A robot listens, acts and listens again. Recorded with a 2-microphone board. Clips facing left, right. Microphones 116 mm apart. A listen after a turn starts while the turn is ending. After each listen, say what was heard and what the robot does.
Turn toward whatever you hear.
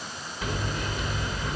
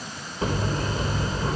The hammering: about 40° right or 140° right. Turn 40° right.
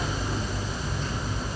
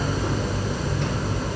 So it is at 100° right. Turn 100° right.
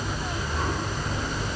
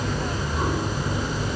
The hammering is now 10° right. Turn 10° right.
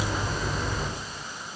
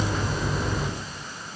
Found it: hammering, straight ahead, over 4 m away.